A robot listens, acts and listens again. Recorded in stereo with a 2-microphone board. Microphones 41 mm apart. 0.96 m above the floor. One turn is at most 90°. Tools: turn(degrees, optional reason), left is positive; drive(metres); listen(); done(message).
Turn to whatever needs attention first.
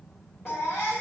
turn(degrees=90)
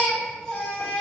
turn(degrees=10, reason="So it is at 10° left.")
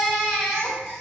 done("Facing the baby crying, 1 to 2 m away.")